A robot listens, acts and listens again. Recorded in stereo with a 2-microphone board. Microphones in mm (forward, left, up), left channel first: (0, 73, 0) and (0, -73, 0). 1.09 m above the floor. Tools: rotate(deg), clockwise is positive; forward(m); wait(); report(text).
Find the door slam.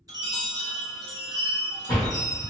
rotate(-70)
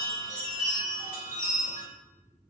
wait()
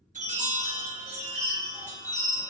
report("I heard a door slam, but can't make it out now. It was about straight ahead or 40° left.")